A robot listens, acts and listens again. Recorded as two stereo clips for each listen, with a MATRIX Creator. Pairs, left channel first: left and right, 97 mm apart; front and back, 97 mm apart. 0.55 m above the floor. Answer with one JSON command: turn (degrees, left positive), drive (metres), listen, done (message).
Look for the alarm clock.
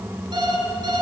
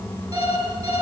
{"turn": -135}
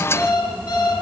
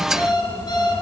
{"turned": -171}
{"turn": 35}
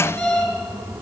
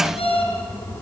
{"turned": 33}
{"done": "Facing the alarm clock, over 4 m away."}